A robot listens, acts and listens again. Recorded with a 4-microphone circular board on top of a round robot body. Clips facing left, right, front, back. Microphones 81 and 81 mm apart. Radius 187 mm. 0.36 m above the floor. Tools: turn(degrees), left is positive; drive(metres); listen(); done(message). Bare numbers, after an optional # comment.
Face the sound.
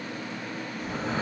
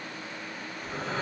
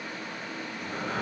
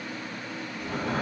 # The breathing: 170° left.
turn(170)
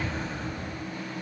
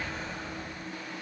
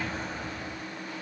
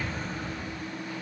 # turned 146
# The breathing is now 25° left.
turn(25)
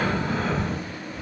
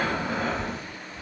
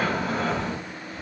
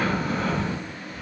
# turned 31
done("Found it: breathing, straight ahead, 1 to 2 m away.")